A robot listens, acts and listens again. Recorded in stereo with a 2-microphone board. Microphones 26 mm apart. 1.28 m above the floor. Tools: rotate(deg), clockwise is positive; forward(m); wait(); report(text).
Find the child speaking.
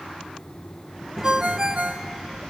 rotate(-30)
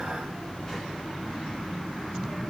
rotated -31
rotate(-150)
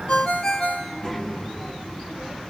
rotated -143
report("Facing the child speaking, over 4 m away.")